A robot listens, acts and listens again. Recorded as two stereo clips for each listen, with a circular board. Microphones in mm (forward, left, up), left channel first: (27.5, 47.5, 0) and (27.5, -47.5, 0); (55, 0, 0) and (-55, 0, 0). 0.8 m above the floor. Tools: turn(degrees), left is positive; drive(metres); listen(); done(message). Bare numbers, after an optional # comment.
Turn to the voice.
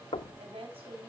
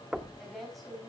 # The woman speaking: 90° right.
turn(-90)
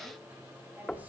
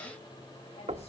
listen()
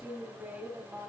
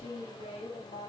# The woman speaking is now 15° right.
turn(-15)
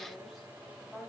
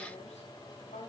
done("Found it: a woman speaking, straight ahead.")